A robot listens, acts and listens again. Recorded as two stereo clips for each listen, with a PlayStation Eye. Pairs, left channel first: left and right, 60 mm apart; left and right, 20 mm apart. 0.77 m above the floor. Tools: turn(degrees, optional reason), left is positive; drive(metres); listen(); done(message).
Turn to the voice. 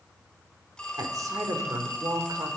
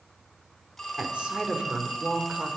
turn(degrees=-75, reason="The woman speaking: about 75° right or 105° right.")
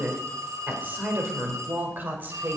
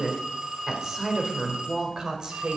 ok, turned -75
turn(degrees=-35, reason="So it is at 35° right.")
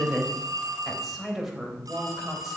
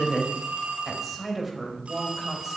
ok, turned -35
done("Facing the woman speaking, 2 to 4 m away.")